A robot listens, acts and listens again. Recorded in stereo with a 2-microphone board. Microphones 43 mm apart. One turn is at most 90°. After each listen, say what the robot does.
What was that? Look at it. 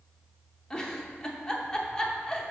Turn 15° left.
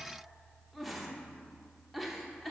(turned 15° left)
Found it: a giggle, straight ahead.